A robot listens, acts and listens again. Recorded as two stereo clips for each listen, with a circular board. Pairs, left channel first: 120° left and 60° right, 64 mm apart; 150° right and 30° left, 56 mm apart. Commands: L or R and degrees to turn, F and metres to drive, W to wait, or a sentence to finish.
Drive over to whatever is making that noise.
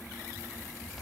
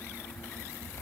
W
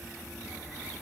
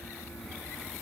W
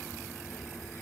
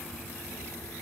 I can't make out anything to turn to.